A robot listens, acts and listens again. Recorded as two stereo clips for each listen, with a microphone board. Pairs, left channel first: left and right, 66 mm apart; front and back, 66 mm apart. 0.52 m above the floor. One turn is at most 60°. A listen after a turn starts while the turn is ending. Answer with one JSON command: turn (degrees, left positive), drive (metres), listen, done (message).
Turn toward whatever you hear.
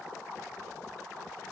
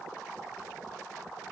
{"listen": true}
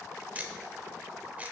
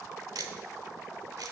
{"turn": -60}
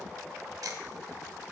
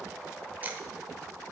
{"turn": -60}
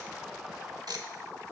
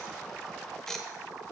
{"turn": -60}
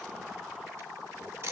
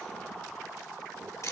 {"turn": -40}
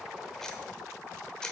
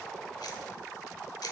{"turn": 10}
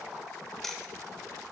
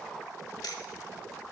{"done": "Found it: ticking, straight ahead."}